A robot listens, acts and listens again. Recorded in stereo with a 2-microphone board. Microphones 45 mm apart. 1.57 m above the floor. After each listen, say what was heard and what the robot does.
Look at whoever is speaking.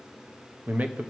The man speaking: about 35° right or 145° right. Turn 35° right.
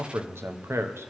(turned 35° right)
So it is at 115° right. Turn 115° right.
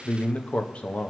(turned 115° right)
The man speaking is now 25° left. Turn 25° left.
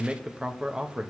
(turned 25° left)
The man speaking is now 25° right. Turn 25° right.
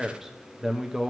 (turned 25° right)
The man speaking is now 10° right. Turn 10° right.
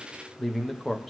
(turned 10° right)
Facing the man speaking, under 1 m away.